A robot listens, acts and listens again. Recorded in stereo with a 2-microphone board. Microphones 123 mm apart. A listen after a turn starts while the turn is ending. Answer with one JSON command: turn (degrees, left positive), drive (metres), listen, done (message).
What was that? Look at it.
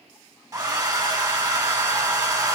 {"turn": -30}
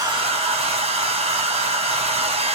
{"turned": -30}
{"turn": -115}
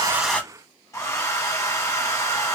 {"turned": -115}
{"turn": 25}
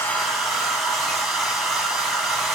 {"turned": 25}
{"done": "Facing the hair dryer, under 1 m away."}